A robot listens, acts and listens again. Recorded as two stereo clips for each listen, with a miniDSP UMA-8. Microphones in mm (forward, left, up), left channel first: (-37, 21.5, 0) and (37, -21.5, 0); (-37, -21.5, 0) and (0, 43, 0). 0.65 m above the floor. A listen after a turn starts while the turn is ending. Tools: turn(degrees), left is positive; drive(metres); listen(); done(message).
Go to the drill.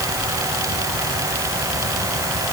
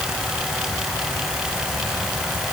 listen()
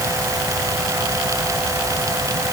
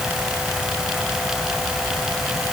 listen()
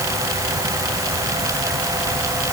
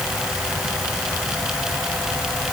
done("I can't make out a drill.")